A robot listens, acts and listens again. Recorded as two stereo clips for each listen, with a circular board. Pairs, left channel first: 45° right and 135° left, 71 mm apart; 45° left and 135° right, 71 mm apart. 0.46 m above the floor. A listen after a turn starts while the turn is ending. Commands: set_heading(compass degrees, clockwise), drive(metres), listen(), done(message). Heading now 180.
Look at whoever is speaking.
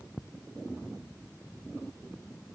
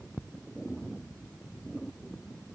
listen()
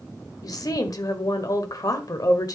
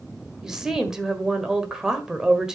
set_heading(235)
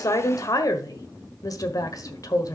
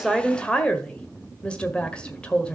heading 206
set_heading(236)
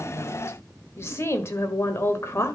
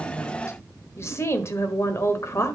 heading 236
done("Facing the woman speaking, 1 to 2 m away.")